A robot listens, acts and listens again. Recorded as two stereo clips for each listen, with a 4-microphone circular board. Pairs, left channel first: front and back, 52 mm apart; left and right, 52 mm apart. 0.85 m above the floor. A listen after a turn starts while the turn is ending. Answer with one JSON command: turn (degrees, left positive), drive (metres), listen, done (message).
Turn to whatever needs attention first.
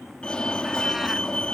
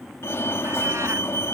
{"turn": 70}
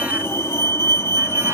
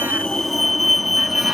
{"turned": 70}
{"done": "Facing the fire alarm."}